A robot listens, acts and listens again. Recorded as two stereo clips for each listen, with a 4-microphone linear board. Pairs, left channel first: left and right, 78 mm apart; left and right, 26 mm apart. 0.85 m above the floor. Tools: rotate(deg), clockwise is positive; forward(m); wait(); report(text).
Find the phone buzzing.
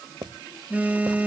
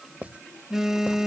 rotate(20)
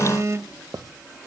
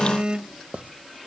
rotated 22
rotate(135)
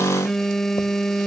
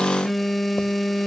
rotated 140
report("Found it: a phone buzzing, straight ahead.")